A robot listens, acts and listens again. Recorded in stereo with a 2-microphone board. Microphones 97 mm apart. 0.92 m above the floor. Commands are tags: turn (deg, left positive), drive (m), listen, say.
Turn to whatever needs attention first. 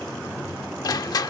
<listen/>
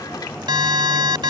<turn deg="-55"/>
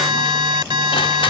<turn deg="-65"/>
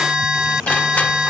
<turn deg="-10"/>
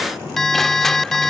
<say>Found it: an alarm, straight ahead.</say>